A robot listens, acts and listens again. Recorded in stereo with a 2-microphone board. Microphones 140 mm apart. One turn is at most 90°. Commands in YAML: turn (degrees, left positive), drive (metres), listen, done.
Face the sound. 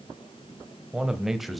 turn: 30
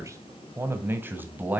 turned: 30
turn: -30
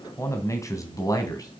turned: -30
turn: 25
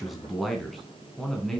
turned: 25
done: "Found it: a man speaking, straight ahead, 2 to 4 m away."